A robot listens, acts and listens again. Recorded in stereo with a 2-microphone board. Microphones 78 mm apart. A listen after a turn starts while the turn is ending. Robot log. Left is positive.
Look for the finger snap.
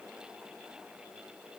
cmd idle
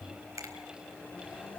note: The finger snap: about 40° right or 140° right.
cmd yaw -40
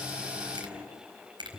note: So it is at 100° right.
cmd yaw -100
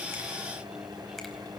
cmd idle
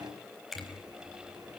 end: Found it: a finger snap, straight ahead.